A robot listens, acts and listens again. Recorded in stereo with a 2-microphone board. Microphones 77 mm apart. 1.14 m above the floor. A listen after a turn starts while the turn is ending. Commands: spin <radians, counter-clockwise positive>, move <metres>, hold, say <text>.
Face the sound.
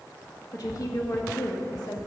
spin 1.13
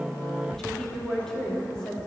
spin 0.17
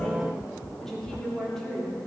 spin 0.17
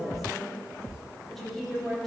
say Found it: a woman speaking, straight ahead.